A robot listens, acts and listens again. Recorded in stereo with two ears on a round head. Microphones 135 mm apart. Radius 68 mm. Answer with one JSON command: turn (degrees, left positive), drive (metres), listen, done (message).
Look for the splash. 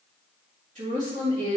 {"listen": true}
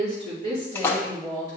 {"turn": 30}
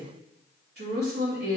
{"listen": true}
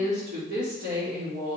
{"done": "I heard a splash, but can't make it out now. It was about 15° right or 135° left."}